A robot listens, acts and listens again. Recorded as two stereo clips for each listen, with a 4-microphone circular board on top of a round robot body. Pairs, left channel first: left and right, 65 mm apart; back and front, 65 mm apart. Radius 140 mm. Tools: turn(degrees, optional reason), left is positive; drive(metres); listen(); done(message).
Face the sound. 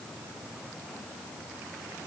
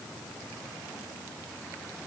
listen()
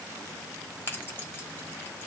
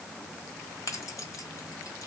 turn(degrees=145, reason="The keys jangling: 145° left.")
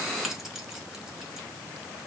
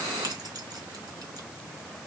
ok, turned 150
listen()
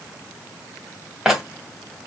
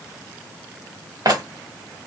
turn(degrees=-10, reason="The keys jangling is now 10° right.")
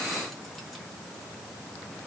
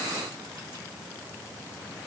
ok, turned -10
listen()
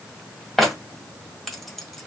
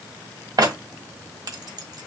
done("Facing the keys jangling.")